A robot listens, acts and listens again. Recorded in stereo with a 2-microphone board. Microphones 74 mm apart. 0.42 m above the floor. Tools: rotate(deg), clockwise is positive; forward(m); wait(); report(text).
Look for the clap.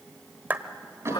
rotate(25)
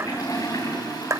rotate(125)
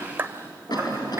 rotate(35)
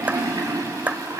rotate(25)
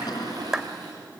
rotate(10)
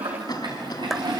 report("Found it: a clap, straight ahead, 1 to 2 m away.")